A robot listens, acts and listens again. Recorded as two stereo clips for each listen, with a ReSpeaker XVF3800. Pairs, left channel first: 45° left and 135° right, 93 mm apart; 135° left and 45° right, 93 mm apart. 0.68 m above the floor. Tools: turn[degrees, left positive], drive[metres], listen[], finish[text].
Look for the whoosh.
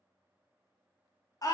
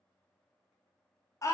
Action: listen[]
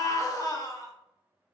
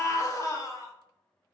Action: listen[]
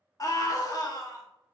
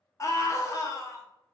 Action: finish[I can't make out a whoosh to turn to.]